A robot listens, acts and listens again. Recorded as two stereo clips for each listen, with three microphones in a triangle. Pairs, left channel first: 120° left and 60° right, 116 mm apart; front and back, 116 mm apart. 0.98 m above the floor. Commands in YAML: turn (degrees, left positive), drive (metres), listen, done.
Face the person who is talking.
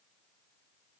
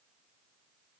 listen: true
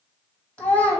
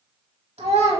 turn: -160
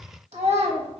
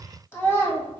turn: -70
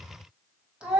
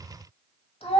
turn: 20
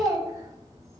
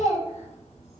done: "Found it: a child speaking, straight ahead."